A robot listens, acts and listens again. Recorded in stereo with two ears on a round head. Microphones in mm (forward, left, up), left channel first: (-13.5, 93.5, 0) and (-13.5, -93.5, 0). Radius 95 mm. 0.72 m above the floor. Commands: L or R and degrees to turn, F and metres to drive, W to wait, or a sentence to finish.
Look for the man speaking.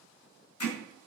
W
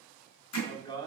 L20
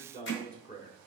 L30
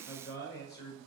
L130
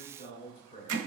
L25
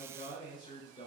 L20
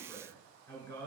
Found it: a man speaking, straight ahead, 2 to 4 m away.